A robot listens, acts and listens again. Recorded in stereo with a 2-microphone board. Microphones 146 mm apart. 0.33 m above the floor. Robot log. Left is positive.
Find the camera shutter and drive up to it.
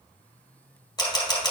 note: The camera shutter: about 30° left or 150° left.
cmd yaw +30
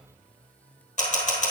note: So it is at 120° left.
cmd yaw +120
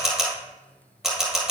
cmd fwd 1.0
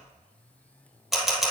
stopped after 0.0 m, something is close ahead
end: Blocked. The camera shutter is further on, straight ahead.